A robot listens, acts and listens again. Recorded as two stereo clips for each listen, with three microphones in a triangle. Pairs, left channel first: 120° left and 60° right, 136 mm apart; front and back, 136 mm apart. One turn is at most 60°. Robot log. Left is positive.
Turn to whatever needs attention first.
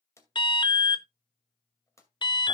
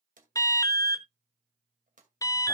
note: The alarm: 65° left.
cmd yaw +60
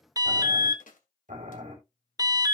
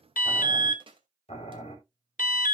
end: Found it: an alarm, straight ahead.